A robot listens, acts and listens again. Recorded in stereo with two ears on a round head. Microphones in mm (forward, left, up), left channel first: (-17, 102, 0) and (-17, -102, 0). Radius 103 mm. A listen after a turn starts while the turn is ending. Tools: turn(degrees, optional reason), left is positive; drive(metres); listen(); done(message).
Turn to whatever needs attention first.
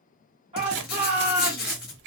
turn(degrees=-25, reason="The shout: about 25° right or 155° right.")
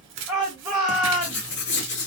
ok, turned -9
turn(degrees=-15, reason="The shout: about 15° right or 165° right.")
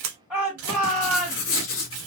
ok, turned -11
done("Found it: a shout, straight ahead, 1 to 2 m away.")